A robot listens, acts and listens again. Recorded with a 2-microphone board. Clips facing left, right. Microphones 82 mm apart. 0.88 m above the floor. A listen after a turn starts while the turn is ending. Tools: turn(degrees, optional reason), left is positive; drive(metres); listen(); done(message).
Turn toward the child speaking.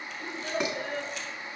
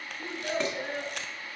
turn(degrees=-20, reason="The child speaking: about 20° right or 160° right.")
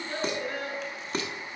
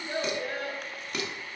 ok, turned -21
turn(degrees=-30, reason="The child speaking: about 30° right or 150° right.")
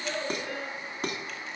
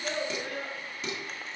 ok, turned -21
turn(degrees=-140, reason="So it is at 140° right.")
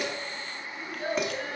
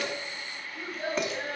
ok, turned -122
turn(degrees=-35, reason="The child speaking is now 35° right.")
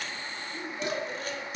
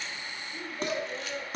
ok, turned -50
turn(degrees=15, reason="The child speaking is now 15° left.")
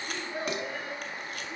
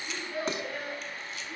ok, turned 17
done("Facing the child speaking, 2 to 4 m away.")